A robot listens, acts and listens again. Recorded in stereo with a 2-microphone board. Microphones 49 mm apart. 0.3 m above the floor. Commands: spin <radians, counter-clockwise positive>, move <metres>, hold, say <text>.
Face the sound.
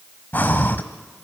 spin 0.70
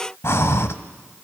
spin 1.57
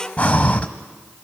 spin 0.52
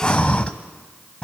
spin 0.44
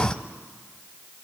spin 0.35
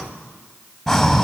say Facing the breathing, 1 to 2 m away.